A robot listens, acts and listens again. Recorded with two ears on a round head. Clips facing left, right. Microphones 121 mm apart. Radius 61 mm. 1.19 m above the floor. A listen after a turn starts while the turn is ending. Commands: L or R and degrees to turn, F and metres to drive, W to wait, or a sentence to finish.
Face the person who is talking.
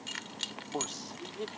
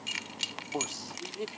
R30
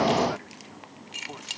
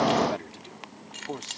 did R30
R145
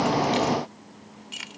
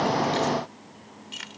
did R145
W
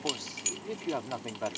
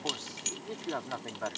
L15
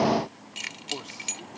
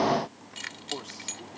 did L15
W
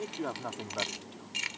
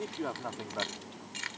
Facing the man speaking.